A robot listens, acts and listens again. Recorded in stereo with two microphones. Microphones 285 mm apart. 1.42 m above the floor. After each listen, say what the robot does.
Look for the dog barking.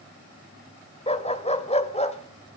Turn 20° left.
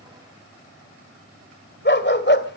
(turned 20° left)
Turn 135° left.
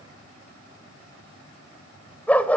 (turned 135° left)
Facing the dog barking.